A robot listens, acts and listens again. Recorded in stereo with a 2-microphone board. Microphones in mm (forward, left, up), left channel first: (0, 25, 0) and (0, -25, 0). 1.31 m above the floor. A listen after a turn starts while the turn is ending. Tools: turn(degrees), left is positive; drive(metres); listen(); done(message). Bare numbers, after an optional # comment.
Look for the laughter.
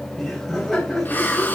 turn(30)
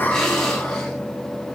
listen()
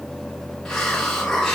listen()
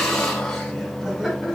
# So it is at 15° right.
turn(-15)
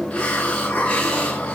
listen()
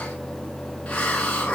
listen()
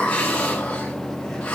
done("Facing where the laughter came from. I can't hear it now.")